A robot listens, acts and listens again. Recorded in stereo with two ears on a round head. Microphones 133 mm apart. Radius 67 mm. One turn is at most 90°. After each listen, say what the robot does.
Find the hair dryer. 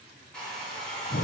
Turn 30° left.
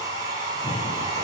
Turn 25° right.
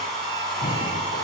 Facing the hair dryer, over 4 m away.